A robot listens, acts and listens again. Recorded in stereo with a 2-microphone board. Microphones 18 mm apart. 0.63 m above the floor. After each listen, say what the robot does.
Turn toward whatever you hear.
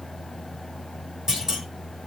Turn 35° right.
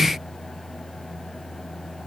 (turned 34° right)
Keep listening.
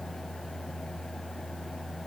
I heard a clunk, but can't make it out now. It was about straight ahead or 110° right.